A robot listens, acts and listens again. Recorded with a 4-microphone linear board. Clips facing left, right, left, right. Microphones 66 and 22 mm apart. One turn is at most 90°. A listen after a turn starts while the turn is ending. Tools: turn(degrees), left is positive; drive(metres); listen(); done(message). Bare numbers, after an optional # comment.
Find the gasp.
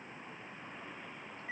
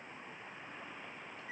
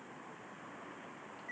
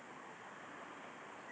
listen()
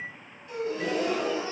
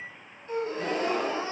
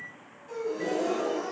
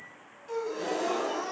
# The gasp: about 35° right or 145° right.
turn(-35)
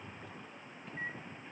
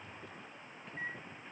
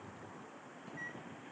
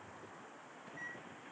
listen()
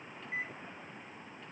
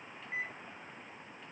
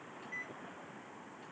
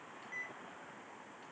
done("I heard a gasp, but can't make it out now. It was about straight ahead or 110° right.")